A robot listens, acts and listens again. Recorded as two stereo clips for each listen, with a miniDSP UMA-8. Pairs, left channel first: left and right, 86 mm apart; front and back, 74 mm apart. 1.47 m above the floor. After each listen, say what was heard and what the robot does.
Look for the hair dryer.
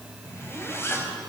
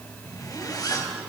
Keep listening.
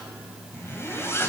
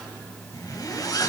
Keep listening.
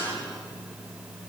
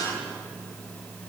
I can't make out a hair dryer to turn to.